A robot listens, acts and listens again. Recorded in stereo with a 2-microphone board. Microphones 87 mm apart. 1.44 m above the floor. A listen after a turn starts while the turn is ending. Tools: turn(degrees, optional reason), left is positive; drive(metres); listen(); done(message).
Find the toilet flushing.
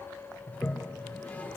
turn(degrees=15, reason="The toilet flushing: about 15° left or 165° left.")
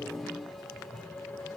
done("Found it: a toilet flushing, straight ahead, 1 to 2 m away.")